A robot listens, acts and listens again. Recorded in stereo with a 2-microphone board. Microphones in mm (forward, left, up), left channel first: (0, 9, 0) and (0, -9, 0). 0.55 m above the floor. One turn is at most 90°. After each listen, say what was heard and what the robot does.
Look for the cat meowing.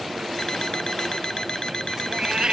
The cat meowing: about 45° right or 135° right. Turn 45° right.
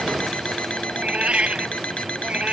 So it is at 90° right. Turn 90° right.
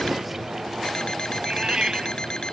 The cat meowing is now 40° right. Turn 40° right.
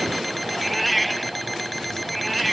Facing the cat meowing.